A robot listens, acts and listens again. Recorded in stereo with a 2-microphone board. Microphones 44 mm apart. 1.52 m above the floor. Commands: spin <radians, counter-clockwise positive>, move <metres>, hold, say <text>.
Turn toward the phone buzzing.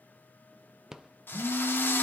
spin -1.57
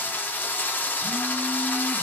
hold
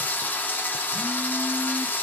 hold
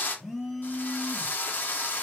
say Found it: a phone buzzing, straight ahead, 2 to 4 m away.